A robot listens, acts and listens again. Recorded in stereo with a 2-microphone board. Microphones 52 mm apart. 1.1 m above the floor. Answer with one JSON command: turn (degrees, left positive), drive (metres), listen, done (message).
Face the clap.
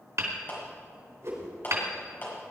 {"turn": 35}
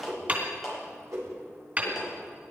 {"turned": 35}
{"done": "Facing the clap."}